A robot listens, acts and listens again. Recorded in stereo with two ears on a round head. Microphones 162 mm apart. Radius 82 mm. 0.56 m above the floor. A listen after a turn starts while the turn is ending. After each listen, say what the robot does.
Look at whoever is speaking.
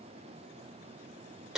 Keep listening.
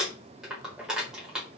Keep listening.
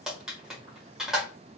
I can't make out anyone speaking, only crumpling.